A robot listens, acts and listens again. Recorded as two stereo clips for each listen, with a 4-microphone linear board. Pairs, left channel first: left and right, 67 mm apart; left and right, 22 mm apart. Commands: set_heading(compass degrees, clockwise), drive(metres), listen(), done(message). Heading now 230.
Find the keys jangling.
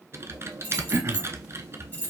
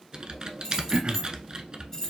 set_heading(200)
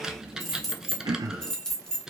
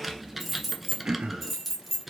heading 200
set_heading(190)
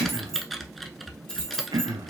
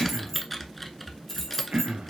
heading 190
set_heading(175)
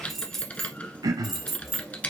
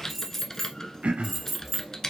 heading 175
done("Facing the keys jangling, 1 to 2 m away.")